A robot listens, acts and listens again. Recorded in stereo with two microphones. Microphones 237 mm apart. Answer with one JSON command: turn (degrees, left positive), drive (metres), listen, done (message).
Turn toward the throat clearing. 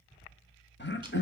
{"turn": 50}
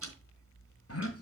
{"turn": 80}
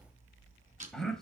{"done": "Facing the throat clearing, 1 to 2 m away."}